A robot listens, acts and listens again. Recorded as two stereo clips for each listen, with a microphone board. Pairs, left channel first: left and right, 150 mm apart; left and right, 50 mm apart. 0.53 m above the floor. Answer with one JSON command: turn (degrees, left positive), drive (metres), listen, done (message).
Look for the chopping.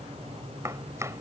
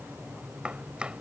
{"turn": -20}
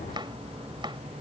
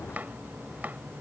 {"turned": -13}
{"turn": -145}
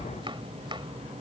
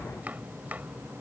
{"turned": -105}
{"turn": -40}
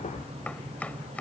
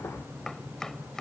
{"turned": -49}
{"turn": 10}
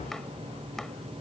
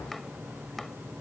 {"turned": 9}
{"done": "Facing the chopping."}